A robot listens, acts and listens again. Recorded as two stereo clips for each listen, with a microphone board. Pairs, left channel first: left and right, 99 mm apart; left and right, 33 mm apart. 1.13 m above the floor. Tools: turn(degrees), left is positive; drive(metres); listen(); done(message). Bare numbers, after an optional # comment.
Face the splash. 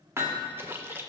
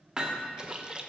# The splash: about 25° right or 155° right.
turn(-25)
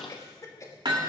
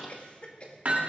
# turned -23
listen()
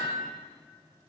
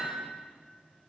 done("I heard a splash, but can't make it out now. It was about straight ahead or 135° right.")